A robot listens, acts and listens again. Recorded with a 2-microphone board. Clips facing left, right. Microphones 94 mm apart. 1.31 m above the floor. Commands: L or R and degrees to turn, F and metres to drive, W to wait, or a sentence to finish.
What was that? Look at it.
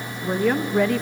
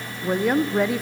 R30
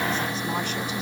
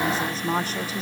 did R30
W
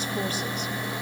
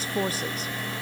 W
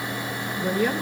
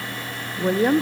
R140
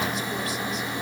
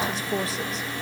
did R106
R35
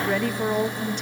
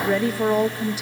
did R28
Found it: a woman speaking, straight ahead, under 1 m away.